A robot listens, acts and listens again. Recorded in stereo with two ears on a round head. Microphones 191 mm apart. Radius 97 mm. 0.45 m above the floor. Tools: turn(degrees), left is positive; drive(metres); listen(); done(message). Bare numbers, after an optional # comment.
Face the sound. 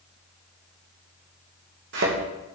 # The thud: about 55° right or 125° right.
turn(-55)
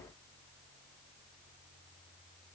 listen()
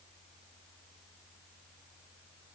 done("I heard a thud, but can't make it out now. It was about straight ahead or 70° right.")